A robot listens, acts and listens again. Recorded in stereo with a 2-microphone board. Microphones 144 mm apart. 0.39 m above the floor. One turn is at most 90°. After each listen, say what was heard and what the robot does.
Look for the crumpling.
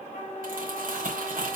The crumpling: about 75° right or 105° right. Turn 75° right.
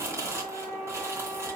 So it is at 20° right. Turn 20° right.
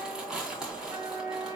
Found it: crumpling, straight ahead, 2 to 4 m away.